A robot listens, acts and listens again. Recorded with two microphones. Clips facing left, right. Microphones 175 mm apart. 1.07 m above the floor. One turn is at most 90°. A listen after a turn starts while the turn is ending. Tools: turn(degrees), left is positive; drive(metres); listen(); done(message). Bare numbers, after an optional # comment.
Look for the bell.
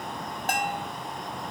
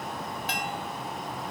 # The bell: about 50° left or 130° left.
turn(50)
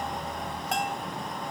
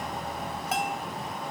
done("Found it: a bell, straight ahead, under 1 m away.")